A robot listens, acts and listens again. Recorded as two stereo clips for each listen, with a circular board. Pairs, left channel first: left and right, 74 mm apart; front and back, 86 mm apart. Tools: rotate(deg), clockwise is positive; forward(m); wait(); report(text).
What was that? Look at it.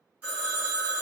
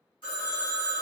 rotate(20)
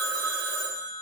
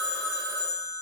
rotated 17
report("Found it: a phone ringing, straight ahead.")